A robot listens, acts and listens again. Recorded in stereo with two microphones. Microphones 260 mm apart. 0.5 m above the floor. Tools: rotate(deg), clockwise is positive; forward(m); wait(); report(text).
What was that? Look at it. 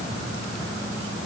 wait()
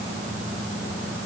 wait()
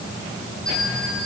rotate(-30)
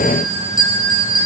rotate(-150)
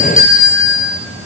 rotate(-50)
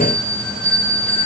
report("Facing the bell.")